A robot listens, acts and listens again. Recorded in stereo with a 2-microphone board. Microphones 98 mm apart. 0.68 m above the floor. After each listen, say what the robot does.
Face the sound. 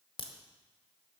Turn 60° left.
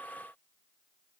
Keep listening.
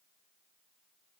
I heard a crack, but can't make it out now. It was about straight ahead or 60° left.